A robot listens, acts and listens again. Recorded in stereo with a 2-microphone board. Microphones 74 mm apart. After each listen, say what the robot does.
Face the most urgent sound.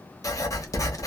Keep listening.
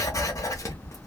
Keep listening.
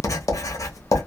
I can't make out anything urgent to turn to.